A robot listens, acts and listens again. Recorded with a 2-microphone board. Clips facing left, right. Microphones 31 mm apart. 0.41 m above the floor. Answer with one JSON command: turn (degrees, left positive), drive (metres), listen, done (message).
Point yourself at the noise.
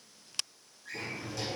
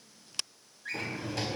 {"turn": -65}
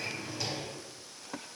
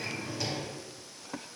{"done": "Found it: a drawer, straight ahead."}